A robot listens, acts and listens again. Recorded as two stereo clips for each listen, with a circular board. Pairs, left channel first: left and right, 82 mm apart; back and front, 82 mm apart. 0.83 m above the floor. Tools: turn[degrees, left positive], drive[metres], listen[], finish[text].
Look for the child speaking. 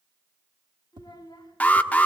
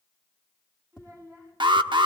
Thought: The child speaking: 45° left.
Action: turn[45]
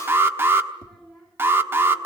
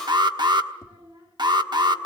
Action: finish[Facing the child speaking.]